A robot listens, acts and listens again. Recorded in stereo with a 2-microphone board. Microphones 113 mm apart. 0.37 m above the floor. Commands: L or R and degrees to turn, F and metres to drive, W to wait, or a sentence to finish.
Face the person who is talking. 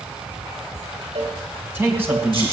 R20
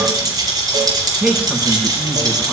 R30
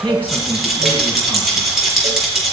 L15
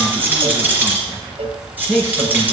Facing the man speaking.